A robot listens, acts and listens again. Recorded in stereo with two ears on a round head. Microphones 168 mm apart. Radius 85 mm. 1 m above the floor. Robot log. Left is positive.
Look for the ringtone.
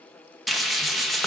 cmd idle
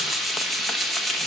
cmd idle
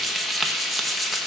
end: I can't make out a ringtone, only frying.